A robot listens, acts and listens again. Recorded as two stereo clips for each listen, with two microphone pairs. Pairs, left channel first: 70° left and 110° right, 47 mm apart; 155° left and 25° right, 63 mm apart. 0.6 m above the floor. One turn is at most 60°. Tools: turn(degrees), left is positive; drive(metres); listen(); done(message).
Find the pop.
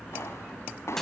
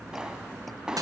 turn(degrees=55)
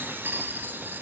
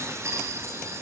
done("I heard a pop from this way, but can't make it out now.")